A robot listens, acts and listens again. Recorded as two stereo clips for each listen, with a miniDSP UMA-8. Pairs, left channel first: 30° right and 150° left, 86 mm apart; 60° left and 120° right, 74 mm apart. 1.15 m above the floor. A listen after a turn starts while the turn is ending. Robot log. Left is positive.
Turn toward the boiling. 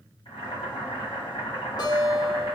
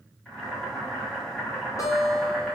note: The boiling: 25° right.
cmd yaw -25
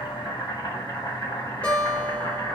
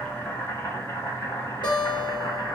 note: The boiling is now 10° left.
cmd yaw +10
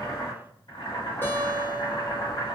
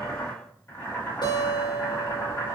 end: Facing the boiling, 1 to 2 m away.